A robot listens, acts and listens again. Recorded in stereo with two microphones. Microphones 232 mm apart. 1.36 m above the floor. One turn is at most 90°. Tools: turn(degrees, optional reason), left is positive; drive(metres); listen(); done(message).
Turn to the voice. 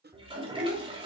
turn(degrees=-55, reason="The child speaking: about 55° right or 125° right.")
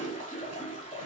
listen()
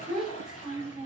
done("Found it: a child speaking, straight ahead.")